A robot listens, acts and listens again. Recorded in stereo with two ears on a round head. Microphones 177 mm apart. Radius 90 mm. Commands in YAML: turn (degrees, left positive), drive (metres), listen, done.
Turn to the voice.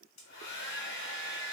listen: true
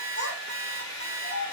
turn: 65
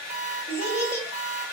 turn: 15
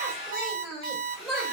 done: "Facing the child speaking, 1 to 2 m away."